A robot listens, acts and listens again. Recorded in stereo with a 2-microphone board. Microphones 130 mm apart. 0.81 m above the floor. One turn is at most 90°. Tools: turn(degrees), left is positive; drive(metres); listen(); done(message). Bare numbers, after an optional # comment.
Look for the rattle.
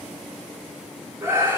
listen()
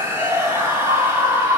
listen()
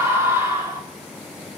done("I can't make out a rattle to turn to.")